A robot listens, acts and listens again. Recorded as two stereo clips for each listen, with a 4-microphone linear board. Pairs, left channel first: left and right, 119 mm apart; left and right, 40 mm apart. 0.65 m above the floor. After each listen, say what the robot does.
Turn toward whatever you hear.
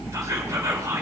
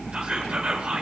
Turn 25° right.
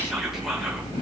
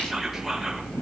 Keep listening.
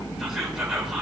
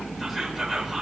Facing the whispering, 2 to 4 m away.